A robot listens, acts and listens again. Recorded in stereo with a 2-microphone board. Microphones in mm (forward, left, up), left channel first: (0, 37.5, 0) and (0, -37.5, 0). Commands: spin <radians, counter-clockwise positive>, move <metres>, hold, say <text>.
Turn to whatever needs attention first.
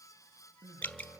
spin -0.61
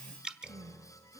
spin -1.92
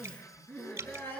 spin 0.44
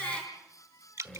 spin 0.44
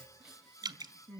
say Found it: crying, straight ahead.